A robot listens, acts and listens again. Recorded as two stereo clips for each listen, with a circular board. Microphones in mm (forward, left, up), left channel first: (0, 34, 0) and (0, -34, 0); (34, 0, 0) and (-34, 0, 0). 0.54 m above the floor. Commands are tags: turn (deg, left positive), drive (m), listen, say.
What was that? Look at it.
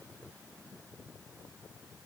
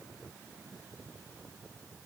<listen/>
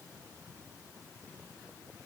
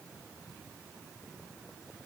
<listen/>
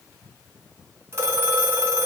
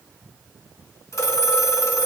<turn deg="-40"/>
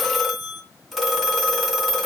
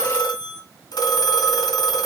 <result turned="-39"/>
<say>Facing the phone ringing, 2 to 4 m away.</say>